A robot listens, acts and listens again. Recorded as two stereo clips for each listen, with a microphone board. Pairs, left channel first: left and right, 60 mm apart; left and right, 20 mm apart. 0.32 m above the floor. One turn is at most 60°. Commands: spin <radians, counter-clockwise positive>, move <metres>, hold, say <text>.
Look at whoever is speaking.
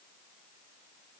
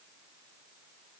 hold
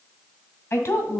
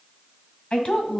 spin 0.87
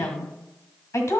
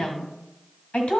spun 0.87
spin 1.05
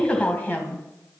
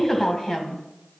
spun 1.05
spin 0.52
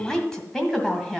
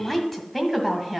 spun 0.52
spin 0.17
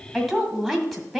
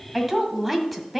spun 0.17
say Facing the woman speaking.